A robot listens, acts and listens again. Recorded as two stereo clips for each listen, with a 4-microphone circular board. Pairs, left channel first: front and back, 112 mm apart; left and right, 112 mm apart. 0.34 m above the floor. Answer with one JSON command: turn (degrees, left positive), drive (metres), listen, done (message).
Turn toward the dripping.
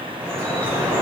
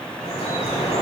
{"turn": 110}
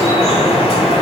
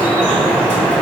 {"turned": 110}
{"turn": 10}
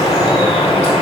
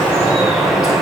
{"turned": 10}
{"done": "Facing the dripping."}